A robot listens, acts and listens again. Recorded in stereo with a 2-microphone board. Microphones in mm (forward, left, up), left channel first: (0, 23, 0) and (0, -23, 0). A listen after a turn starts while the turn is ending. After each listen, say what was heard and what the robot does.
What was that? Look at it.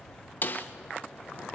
The snare drum: about 45° left or 135° left. Turn 45° left.
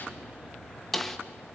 Found it: a snare drum, straight ahead.